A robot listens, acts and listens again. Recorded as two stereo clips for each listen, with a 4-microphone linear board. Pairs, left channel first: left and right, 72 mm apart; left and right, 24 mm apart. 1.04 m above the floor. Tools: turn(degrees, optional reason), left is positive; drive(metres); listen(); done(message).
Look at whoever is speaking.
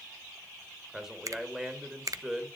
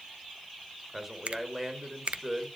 turn(degrees=-30)
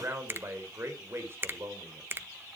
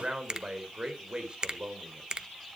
turn(degrees=-145, reason="So it is at 145° right.")
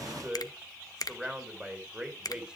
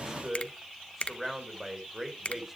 turn(degrees=-15, reason="The man speaking is now 15° right.")
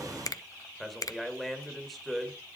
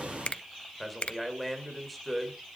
done("Facing the man speaking.")